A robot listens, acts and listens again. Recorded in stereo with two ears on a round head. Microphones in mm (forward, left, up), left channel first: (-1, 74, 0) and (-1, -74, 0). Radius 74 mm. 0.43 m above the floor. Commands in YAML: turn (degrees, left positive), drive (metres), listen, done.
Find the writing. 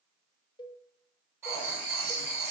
turn: -30
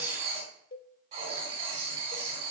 turn: -135
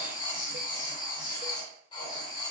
turn: 30
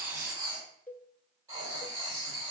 turn: -20
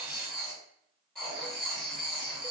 done: "Found it: writing, straight ahead."